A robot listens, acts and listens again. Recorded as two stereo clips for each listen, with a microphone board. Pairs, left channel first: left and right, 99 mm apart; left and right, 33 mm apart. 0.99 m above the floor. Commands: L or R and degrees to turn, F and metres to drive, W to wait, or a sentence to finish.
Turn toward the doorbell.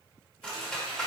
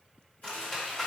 W
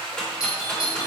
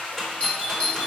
L40
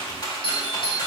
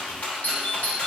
L95
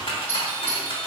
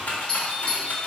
L30
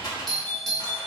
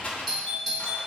Found it: a doorbell, straight ahead.